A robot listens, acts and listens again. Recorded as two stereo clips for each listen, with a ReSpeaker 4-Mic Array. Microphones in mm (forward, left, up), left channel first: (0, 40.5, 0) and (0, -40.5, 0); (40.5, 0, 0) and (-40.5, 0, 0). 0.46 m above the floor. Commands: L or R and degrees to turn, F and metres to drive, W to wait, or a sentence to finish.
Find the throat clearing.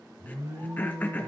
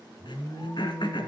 L20
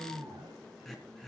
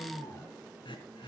Facing the throat clearing, 2 to 4 m away.